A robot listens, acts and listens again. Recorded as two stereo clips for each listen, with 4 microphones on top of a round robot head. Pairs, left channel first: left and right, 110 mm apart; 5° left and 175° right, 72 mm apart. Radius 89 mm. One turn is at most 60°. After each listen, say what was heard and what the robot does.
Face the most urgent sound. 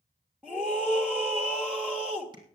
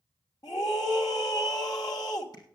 The scream: 10° right. Turn 10° right.
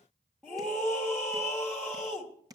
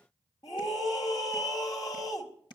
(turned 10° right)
Found it: a scream, straight ahead, 2 to 4 m away.